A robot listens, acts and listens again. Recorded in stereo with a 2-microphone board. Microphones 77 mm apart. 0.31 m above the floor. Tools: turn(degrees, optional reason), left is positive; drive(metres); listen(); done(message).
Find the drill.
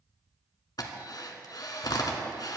turn(degrees=65, reason="The drill: about 65° left or 115° left.")
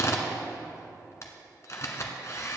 turn(degrees=45, reason="So it is at 45° left.")
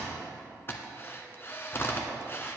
turn(degrees=35, reason="The drill is now 35° left.")
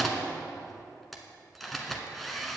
done("Found it: a drill, straight ahead, 1 to 2 m away.")